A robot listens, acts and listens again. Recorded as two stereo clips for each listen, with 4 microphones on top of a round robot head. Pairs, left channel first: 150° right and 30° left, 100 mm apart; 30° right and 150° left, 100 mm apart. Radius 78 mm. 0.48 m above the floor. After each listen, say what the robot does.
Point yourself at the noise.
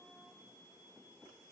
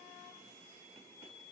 Keep listening.
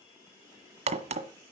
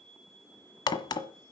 Turn 20° left.
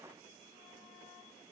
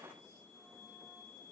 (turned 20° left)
Facing where the crack came from. I can't hear it now.